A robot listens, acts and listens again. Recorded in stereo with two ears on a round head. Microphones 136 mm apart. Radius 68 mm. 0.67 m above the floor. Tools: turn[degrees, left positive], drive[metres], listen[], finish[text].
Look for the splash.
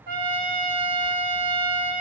Action: listen[]
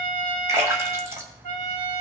Thought: The splash: about 15° right or 165° right.
Action: turn[-15]
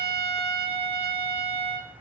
Action: listen[]
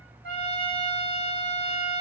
Action: finish[I heard a splash, but can't make it out now. It was about straight ahead or 150° right.]